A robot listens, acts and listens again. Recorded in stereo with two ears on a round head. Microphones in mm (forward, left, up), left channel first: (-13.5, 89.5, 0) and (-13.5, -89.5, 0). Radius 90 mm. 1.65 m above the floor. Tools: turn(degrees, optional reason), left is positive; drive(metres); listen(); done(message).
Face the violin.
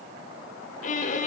turn(degrees=40, reason="The violin: about 40° left or 140° left.")
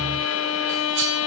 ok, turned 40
turn(degrees=105, reason="So it is at 105° left.")
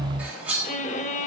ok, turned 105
turn(degrees=35, reason="The violin is now 35° left.")
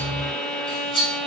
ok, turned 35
done("Facing the violin.")